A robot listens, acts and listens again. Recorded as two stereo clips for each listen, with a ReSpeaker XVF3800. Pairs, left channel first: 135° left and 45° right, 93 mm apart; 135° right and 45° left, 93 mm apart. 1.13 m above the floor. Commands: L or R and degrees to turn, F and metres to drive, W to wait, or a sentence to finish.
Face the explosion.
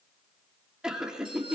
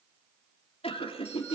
W
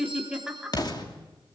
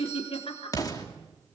L175
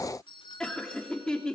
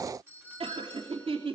Facing where the explosion came from. I can't hear it now.